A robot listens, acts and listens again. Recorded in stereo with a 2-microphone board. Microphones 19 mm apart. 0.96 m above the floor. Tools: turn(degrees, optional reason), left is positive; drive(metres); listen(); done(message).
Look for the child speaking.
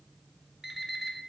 listen()
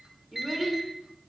turn(degrees=-25, reason="The child speaking: about 25° right or 155° right.")
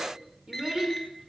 turn(degrees=-130, reason="So it is at 130° right.")
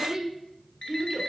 turn(degrees=-15, reason="The child speaking is now 15° right.")
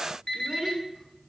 done("Found it: a child speaking, straight ahead.")